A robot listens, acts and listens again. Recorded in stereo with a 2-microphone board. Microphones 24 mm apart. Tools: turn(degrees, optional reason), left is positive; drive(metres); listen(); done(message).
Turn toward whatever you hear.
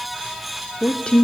turn(degrees=45, reason="The woman speaking: about 45° left or 135° left.")
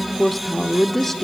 turn(degrees=10, reason="So it is at 10° left.")
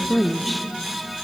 done("Found it: a woman speaking, straight ahead.")